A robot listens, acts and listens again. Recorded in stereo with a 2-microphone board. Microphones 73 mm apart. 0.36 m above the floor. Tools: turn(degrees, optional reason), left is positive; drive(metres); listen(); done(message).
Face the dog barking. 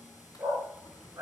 turn(degrees=-45, reason="The dog barking: about 45° right or 135° right.")
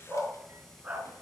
turn(degrees=-25, reason="So it is at 25° right.")
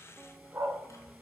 turn(degrees=-35, reason="The dog barking is now 35° right.")
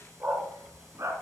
turn(degrees=-45, reason="The dog barking is now 45° right.")
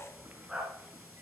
turn(degrees=-10, reason="The dog barking is now 10° right.")
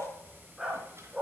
done("Found it: a dog barking, straight ahead.")